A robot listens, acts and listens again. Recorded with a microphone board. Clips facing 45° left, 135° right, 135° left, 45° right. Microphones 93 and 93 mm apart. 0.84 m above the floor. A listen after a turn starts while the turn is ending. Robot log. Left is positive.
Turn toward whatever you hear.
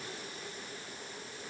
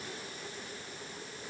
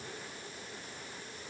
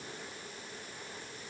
cmd idle
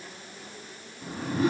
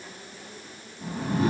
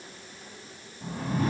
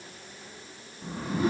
note: The whoosh: 175° left.
cmd yaw +175
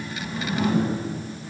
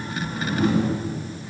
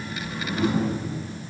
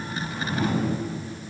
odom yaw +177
end: Facing the whoosh.